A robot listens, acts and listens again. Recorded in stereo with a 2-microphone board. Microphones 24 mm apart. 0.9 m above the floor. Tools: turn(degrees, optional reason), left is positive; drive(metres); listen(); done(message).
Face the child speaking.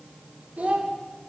turn(degrees=-90)
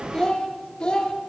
turn(degrees=35, reason="So it is at 35° left.")
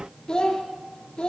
turn(degrees=40, reason="The child speaking is now 40° left.")
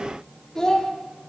turn(degrees=20, reason="The child speaking is now 20° left.")
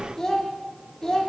turn(degrees=10, reason="The child speaking is now 10° left.")
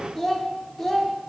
done("Facing the child speaking, 1 to 2 m away.")